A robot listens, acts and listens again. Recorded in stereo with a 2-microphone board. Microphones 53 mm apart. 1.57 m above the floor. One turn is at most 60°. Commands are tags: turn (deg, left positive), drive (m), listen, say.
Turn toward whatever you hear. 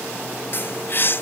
<turn deg="45"/>
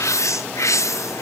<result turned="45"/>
<turn deg="60"/>
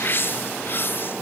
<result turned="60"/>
<turn deg="45"/>
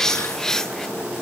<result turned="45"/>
<turn deg="10"/>
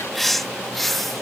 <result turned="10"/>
<say>Found it: a bird, straight ahead.</say>